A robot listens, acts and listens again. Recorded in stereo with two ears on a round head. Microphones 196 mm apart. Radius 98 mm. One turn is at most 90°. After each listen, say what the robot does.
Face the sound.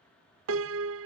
Turn 60° right.
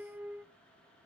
Turn 10° right.
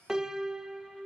Found it: a piano, straight ahead.